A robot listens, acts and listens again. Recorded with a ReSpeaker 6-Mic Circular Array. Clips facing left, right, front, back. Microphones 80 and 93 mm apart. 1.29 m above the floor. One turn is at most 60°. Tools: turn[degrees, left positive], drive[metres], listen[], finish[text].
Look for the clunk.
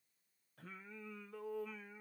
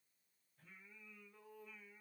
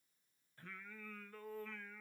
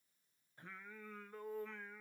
Action: listen[]
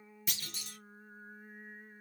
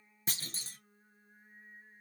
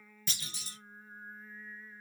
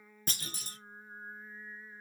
Thought: The clunk: 140° right.
Action: turn[-60]
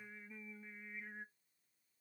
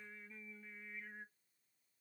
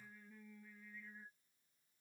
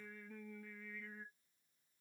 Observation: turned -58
Thought: Nothing new. It was at 85° right.
Action: turn[-60]
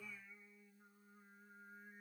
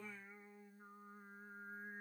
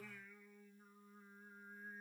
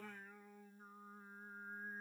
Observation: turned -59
Thought: Nothing new. It was at 25° right.
Action: turn[-25]
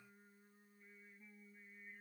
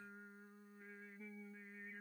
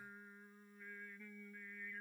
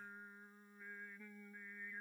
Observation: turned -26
Action: finish[I heard a clunk from this way, but can't make it out now.]